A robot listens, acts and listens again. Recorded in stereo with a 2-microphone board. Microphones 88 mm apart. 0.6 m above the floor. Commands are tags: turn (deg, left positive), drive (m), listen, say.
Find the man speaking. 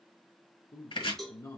<turn deg="50"/>
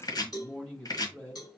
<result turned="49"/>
<turn deg="15"/>
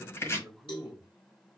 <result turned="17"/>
<say>Found it: a man speaking, straight ahead.</say>